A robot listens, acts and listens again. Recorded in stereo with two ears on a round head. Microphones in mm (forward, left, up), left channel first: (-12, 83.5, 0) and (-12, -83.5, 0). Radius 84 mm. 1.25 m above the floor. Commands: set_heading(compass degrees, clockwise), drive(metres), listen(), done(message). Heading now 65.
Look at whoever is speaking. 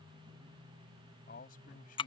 set_heading(20)
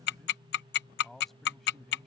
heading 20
done("Found it: a man speaking, straight ahead.")